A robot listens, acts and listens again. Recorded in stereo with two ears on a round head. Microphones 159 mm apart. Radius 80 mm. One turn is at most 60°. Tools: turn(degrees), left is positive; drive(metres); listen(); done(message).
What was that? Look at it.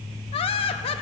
turn(degrees=30)
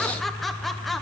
done("Found it: laughter, straight ahead.")